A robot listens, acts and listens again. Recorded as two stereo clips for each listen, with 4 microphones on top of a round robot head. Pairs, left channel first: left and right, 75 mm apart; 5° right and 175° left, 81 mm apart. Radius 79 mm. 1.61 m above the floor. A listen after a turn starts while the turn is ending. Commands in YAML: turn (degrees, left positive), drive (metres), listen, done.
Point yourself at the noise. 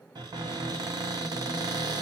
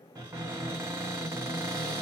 turn: -120
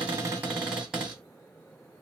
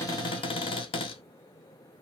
done: "Found it: a cupboard door, straight ahead."